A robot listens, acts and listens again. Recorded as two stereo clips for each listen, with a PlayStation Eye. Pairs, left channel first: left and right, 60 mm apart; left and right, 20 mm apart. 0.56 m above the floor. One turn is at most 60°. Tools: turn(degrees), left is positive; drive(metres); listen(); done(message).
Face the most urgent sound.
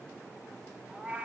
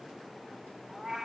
listen()
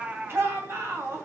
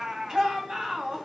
turn(degrees=-45)
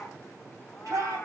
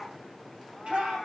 turn(degrees=-60)
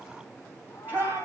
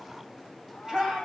turn(degrees=-35)
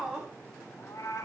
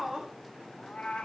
turn(degrees=-10)
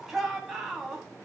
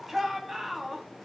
done("Found it: a shout, straight ahead, 2 to 4 m away.")